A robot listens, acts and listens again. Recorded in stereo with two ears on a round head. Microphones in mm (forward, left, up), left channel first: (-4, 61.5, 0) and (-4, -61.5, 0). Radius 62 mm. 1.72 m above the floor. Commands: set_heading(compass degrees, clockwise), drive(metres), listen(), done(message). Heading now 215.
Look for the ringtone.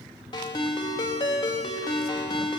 set_heading(180)
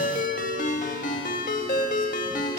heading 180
set_heading(70)
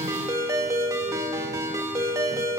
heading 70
set_heading(95)
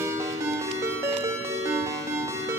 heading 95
set_heading(120)
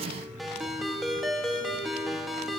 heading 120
done("Facing the ringtone.")